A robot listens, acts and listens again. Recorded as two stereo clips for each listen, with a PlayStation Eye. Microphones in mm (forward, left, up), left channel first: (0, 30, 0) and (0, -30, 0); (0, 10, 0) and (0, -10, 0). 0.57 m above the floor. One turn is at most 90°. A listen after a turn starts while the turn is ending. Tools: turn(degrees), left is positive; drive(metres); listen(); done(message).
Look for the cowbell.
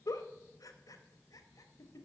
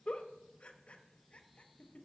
listen()
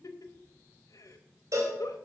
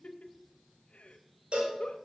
turn(degrees=-60)
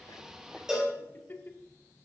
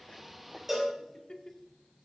turn(degrees=-10)
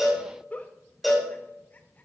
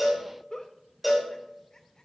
done("Found it: a cowbell, straight ahead.")